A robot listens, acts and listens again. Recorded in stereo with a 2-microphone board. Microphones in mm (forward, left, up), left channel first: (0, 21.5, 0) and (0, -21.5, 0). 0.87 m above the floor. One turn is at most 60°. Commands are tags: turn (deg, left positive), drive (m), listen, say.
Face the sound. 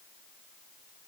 <listen/>
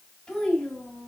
<turn deg="25"/>
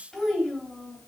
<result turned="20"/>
<turn deg="30"/>
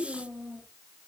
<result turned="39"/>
<turn deg="-15"/>
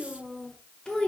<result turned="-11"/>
<turn deg="20"/>
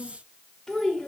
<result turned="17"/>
<turn deg="10"/>
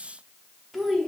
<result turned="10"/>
<say>Facing the child speaking.</say>